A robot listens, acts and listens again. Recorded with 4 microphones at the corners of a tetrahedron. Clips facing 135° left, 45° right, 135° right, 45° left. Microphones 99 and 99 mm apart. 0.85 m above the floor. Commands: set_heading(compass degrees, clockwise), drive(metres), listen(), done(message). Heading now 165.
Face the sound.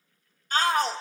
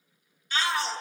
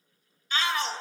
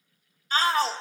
set_heading(70)
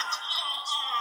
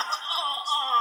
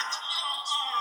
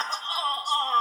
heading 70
done("Facing the shout, 1 to 2 m away.")